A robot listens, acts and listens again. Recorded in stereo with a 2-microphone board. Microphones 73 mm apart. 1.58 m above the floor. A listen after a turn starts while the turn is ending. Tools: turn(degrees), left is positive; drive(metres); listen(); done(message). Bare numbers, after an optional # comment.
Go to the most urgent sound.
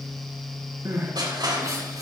# The crying: about 50° right or 130° right.
turn(-50)
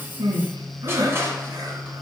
# So it is at 75° right.
turn(-75)
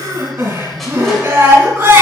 # The crying is now 35° right.
turn(-35)
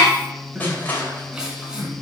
# The crying is now 10° right.
turn(-10)
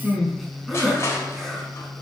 drive(1.0)
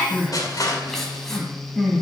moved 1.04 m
drive(1.0)
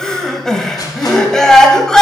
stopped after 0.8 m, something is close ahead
# The crying is now 15° left.
turn(15)
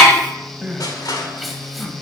done("Arrived at the crying, straight ahead.")